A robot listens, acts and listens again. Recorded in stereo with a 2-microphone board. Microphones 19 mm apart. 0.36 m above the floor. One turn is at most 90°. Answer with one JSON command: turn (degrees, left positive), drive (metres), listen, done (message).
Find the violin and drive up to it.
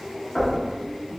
{"listen": true}
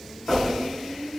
{"listen": true}
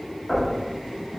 {"done": "I can't make out a violin, only knocking."}